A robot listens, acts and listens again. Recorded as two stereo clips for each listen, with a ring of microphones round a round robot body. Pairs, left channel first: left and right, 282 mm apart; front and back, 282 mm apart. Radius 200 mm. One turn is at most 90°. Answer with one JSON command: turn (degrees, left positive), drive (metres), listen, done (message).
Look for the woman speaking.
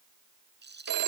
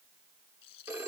{"listen": true}
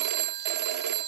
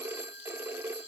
{"listen": true}
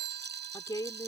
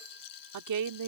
{"turn": 90}
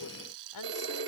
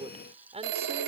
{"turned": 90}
{"turn": 90}
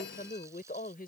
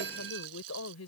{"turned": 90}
{"turn": 30}
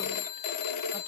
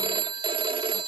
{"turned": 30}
{"listen": true}
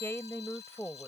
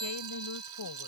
{"turn": 10}
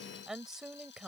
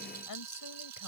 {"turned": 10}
{"done": "Found it: a woman speaking, straight ahead."}